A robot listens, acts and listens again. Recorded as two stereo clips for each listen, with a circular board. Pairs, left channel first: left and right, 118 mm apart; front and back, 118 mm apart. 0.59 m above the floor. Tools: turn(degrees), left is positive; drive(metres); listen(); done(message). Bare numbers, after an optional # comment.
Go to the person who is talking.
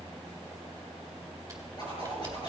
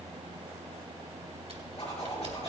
listen()
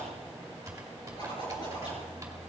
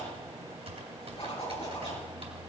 listen()
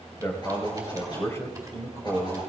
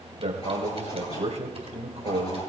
# The man speaking: 155° left.
turn(155)
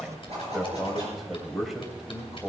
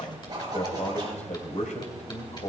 drive(1.0)
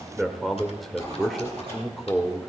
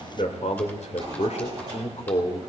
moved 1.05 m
drive(1.0)
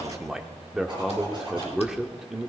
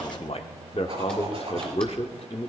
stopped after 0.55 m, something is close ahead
done("Arrived at the man speaking, straight ahead.")